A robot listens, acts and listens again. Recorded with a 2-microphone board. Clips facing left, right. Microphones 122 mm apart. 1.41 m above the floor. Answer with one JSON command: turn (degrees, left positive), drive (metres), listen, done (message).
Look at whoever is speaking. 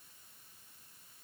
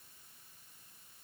{"listen": true}
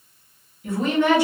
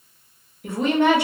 {"turn": -65}
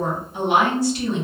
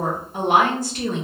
{"turn": -50}
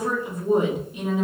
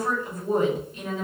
{"turn": 15}
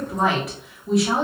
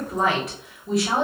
{"done": "Facing the woman speaking, 1 to 2 m away."}